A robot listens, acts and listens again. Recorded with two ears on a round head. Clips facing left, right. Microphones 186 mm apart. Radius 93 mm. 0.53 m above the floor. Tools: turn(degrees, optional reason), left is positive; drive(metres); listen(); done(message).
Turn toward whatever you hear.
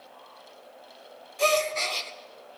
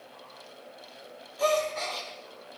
turn(degrees=35, reason="The gasp: about 35° left or 145° left.")
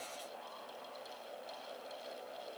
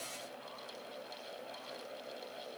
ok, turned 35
listen()
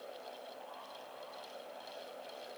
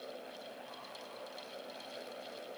done("I heard a gasp, but can't make it out now. It was about straight ahead or 110° left.")